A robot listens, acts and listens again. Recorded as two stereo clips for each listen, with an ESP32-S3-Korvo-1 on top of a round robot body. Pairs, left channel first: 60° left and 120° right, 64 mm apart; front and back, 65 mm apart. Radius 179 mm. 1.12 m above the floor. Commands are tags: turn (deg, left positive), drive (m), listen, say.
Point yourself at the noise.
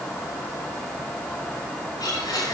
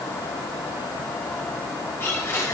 <turn deg="55"/>
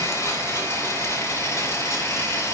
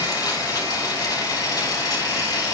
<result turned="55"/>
<turn deg="20"/>
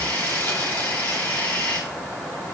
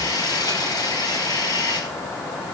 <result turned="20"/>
<say>Facing the blender.</say>